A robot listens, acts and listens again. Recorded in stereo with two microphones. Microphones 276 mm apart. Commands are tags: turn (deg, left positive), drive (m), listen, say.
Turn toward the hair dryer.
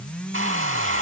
<turn deg="-50"/>
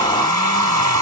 <turn deg="-80"/>
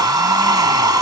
<turn deg="-15"/>
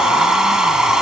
<say>Found it: a hair dryer, straight ahead.</say>